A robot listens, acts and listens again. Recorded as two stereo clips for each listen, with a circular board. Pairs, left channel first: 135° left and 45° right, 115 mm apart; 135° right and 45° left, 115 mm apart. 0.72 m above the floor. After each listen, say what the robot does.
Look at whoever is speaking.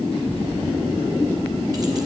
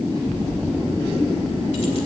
Found it: a child speaking, straight ahead, over 4 m away.